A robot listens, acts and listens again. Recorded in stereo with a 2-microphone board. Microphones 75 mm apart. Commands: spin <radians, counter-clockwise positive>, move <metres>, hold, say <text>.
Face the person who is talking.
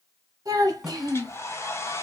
spin -1.13
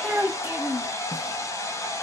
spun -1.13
spin -0.17
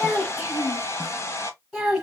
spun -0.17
say Found it: a child speaking, straight ahead.